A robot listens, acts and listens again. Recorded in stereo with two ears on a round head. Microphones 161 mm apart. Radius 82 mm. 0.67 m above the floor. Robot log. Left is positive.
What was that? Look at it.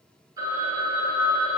note: The phone ringing: about 20° right or 160° right.
cmd yaw -20
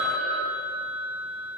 end: Facing the phone ringing, 2 to 4 m away.